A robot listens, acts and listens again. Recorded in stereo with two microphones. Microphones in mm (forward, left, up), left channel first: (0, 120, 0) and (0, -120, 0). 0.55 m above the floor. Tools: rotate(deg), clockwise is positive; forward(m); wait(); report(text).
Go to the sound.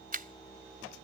rotate(40)
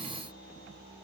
wait()
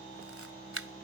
rotate(100)
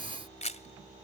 rotate(-30)
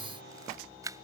rotate(15)
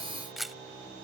forward(1.0)
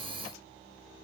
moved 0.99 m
wait()
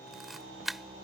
forward(1.0)
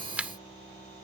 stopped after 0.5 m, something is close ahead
report("I am next to the camera shutter.")